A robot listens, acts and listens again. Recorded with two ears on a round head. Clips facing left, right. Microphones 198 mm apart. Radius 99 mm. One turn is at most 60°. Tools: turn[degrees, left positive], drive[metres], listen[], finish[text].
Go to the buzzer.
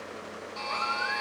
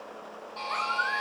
Thought: The buzzer: about 25° left or 155° left.
Action: turn[25]
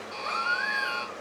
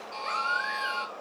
Thought: So it is at 125° left.
Action: turn[60]
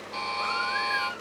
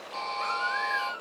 Thought: The buzzer is now 90° left.
Action: turn[60]
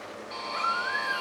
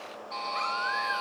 Thought: The buzzer is now 50° left.
Action: turn[50]
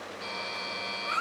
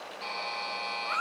Thought: The buzzer is now 20° left.
Action: turn[20]
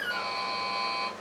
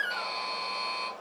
Action: drive[1.0]
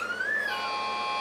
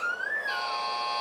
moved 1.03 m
Action: drive[1.0]
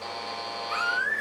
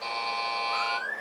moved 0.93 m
Action: drive[1.0]
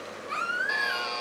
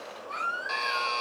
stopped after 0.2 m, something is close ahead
Action: finish[Arrived at the buzzer, straight ahead.]